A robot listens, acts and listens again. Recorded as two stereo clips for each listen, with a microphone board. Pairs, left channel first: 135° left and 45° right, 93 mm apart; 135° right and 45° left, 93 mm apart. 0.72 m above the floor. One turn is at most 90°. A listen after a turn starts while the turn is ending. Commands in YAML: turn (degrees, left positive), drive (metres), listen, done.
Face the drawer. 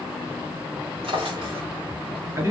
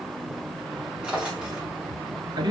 turn: -35
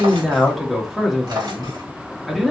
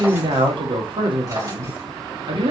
done: "Found it: a drawer, straight ahead."